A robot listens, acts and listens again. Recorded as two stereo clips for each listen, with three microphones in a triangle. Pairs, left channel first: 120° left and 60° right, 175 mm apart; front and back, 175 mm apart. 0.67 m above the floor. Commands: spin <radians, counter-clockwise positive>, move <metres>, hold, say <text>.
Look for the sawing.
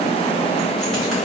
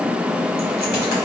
hold
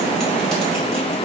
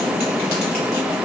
hold
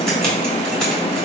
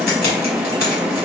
say I can't make out sawing, only keys jangling.